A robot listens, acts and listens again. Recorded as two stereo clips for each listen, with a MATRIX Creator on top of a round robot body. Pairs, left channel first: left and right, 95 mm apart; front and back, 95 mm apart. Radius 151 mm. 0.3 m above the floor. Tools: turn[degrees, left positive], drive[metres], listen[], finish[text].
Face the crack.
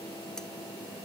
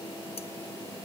Action: listen[]
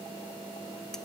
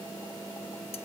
Action: listen[]
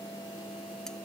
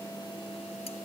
Action: finish[I can't make out a crack to turn to.]